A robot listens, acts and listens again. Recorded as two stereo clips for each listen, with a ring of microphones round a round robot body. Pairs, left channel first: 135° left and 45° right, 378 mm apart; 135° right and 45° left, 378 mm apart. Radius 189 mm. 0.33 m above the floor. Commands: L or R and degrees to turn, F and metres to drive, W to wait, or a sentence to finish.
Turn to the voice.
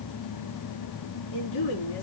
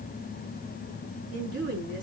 L100
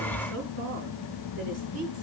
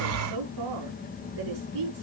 L10
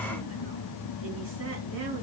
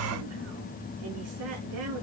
W
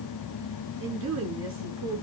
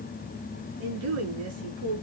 Found it: a woman speaking, straight ahead.